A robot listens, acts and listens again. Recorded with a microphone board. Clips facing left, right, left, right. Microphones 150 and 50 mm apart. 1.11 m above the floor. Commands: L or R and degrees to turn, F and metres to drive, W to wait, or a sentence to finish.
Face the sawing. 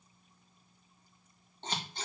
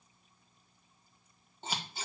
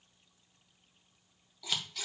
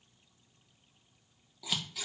W
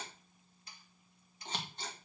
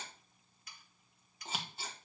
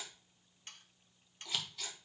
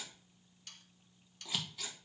L30
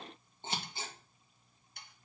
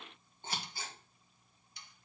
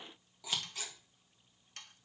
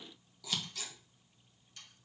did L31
L120
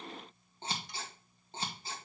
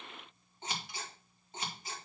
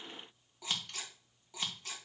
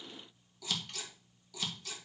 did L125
W
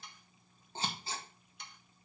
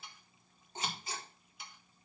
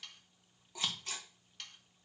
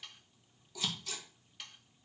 Found it: sawing, straight ahead.